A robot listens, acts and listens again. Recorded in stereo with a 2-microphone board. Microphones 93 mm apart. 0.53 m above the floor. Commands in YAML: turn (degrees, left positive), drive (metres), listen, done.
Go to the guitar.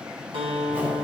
turn: -70
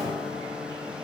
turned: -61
listen: true
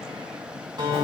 turn: -50
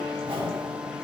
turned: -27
turn: -20
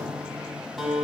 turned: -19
drive: 1.0
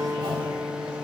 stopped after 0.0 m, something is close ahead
done: "Blocked. The guitar is further on, straight ahead."